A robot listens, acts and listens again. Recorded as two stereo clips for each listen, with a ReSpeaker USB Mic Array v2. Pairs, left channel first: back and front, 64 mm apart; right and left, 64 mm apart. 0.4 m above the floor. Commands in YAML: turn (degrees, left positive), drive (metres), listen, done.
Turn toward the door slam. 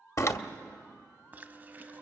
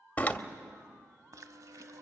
turn: -150
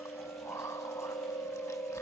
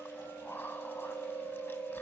done: "Facing where the door slam came from. I can't hear it now."